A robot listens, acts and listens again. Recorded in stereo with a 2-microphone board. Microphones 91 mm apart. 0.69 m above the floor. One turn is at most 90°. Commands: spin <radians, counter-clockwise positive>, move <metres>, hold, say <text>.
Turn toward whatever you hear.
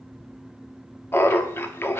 spin 0.44
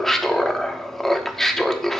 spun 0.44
say Facing the laughter.